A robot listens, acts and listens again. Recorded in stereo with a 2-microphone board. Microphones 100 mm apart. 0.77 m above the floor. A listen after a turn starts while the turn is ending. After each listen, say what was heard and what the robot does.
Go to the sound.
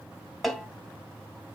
Turn 30° left.
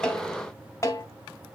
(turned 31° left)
So it is at 150° left. Turn 150° left.
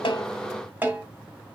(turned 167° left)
The snare drum is now 20° right. Turn 20° right.
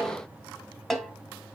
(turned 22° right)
Drive 1.0 m forward.
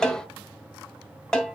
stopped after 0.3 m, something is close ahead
The snare drum is now 10° left. Turn 10° left.
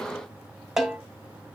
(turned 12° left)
Blocked. The snare drum is further on, straight ahead.